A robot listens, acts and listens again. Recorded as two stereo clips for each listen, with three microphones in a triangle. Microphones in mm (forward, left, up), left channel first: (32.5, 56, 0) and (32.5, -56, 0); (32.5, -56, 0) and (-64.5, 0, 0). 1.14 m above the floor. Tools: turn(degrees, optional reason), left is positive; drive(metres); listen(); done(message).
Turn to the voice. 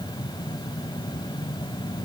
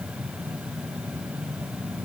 listen()
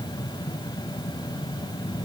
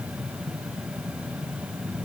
listen()
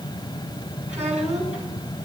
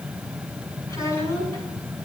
turn(degrees=-90, reason="The child speaking: 90° right.")
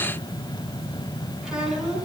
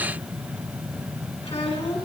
done("Found it: a child speaking, straight ahead, over 4 m away.")